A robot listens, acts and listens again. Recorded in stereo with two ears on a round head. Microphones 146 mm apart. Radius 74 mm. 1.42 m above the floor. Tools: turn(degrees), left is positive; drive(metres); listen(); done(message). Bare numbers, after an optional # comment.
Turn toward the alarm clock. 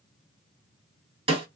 listen()
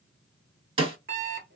# The alarm clock: about 60° right or 120° right.
turn(-60)
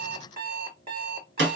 # So it is at 40° right.
turn(-40)
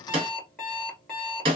done("Found it: an alarm clock, straight ahead.")